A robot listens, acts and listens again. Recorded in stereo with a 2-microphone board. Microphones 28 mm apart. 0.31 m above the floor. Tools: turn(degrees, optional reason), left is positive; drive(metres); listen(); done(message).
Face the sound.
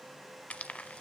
turn(degrees=50, reason="The frying: about 50° left or 130° left.")
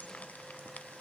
listen()
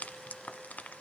turn(degrees=75, reason="So it is at 75° left.")
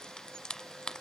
turn(degrees=30, reason="The frying is now 30° left.")
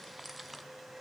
done("Found it: frying, straight ahead, 1 to 2 m away.")